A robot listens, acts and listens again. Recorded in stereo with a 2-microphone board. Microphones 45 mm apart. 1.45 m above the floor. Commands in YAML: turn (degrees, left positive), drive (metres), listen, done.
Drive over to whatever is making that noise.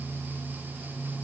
listen: true
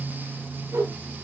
turn: -70
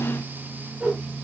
turn: -30
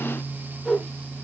drive: 1.0
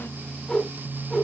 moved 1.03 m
turn: 10
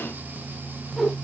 drive: 1.0
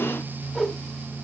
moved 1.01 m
drive: 1.0
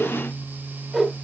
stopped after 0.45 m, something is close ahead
turn: -15
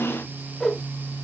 done: "I am next to the whoosh."